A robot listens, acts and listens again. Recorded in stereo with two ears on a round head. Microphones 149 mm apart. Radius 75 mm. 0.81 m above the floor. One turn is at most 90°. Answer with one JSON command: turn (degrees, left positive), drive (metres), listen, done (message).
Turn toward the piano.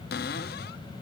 {"listen": true}
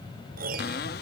{"turn": -55}
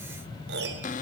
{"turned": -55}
{"turn": -65}
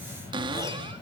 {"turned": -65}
{"listen": true}
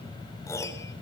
{"turn": 15}
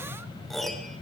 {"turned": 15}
{"done": "Found it: a piano, straight ahead, 2 to 4 m away."}